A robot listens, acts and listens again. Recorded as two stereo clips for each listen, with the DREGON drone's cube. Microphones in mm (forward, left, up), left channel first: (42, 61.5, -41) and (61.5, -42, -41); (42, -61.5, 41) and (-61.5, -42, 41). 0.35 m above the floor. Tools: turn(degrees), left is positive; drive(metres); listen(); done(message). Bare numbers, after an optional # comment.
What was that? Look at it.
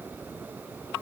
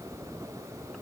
listen()
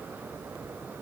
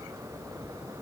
listen()
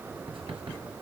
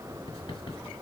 # The writing: 45° right.
turn(-45)
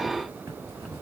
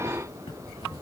# The writing is now 20° right.
turn(-20)
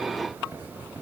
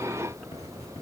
# The writing is now 10° right.
turn(-10)
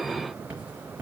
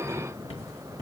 done("Facing the writing, over 4 m away.")